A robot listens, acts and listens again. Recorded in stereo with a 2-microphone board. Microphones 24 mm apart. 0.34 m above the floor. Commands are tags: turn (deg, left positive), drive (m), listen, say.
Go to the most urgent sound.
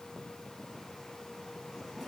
<listen/>
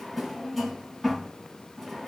<listen/>
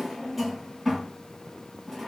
<say>I can't make out anything urgent, only a drawer.</say>